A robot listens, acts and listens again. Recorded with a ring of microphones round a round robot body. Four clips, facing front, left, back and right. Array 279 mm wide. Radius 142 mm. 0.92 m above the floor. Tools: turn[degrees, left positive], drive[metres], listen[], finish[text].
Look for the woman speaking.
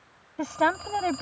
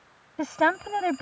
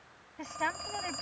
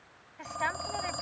Thought: The woman speaking: 55° left.
Action: turn[55]
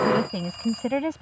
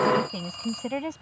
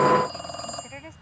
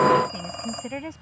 Action: finish[Facing the woman speaking.]